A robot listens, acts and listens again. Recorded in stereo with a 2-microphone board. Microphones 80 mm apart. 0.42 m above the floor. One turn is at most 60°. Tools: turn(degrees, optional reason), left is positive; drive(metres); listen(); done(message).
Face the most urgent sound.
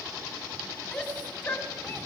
turn(degrees=15, reason="The shout: about 15° left or 165° left.")
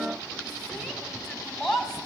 done("Facing the shout, 2 to 4 m away.")